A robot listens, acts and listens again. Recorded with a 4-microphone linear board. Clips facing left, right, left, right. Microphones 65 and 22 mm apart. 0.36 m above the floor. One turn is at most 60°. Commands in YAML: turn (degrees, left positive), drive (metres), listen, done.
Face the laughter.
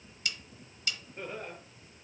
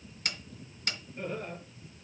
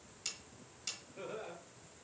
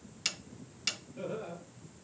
turn: 30
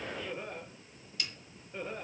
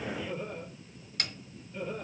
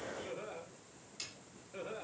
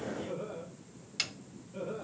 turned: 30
turn: 60
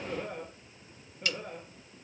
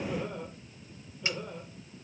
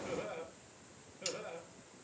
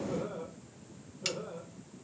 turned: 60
turn: 60
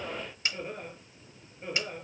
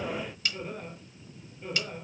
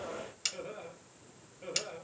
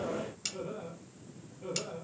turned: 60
turn: 20
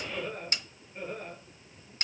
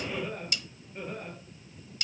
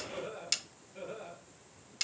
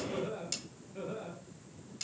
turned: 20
done: "Found it: laughter, straight ahead."